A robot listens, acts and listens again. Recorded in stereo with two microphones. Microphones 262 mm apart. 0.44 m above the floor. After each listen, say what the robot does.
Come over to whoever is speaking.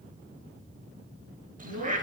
Turn 55° right.
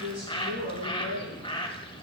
Turn 70° right.
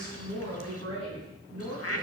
Turn 20° left.
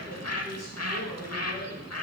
Drive 1.0 m forward.
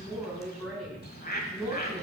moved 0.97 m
Drive 1.0 m forward.
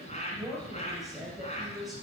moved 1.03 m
Drive 1.0 m forward.
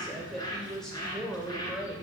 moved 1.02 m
Drive 1.0 m forward.
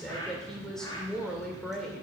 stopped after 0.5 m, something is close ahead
Arrived at the woman speaking, straight ahead.